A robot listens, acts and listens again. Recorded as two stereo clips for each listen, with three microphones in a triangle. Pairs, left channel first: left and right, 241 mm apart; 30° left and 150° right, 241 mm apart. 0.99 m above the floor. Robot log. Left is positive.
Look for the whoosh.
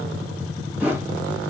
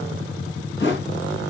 end: Facing the whoosh.